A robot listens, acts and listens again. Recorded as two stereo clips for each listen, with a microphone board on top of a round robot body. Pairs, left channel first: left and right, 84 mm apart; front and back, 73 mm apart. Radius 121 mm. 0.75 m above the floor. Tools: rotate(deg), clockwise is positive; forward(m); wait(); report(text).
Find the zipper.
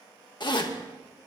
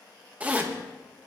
rotate(-110)
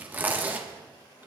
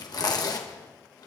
rotate(25)
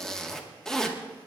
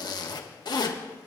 report("Found it: a zipper, straight ahead.")